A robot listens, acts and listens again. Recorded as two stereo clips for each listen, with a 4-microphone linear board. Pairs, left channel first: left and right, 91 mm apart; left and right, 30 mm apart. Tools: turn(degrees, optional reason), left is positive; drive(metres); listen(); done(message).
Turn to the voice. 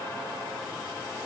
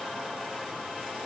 listen()
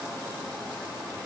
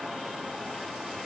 listen()
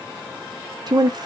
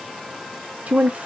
turn(degrees=-50, reason="The woman speaking: about 50° right or 130° right.")
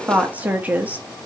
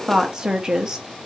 turn(degrees=-20, reason="So it is at 20° right.")
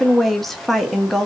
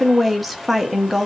done("Facing the woman speaking.")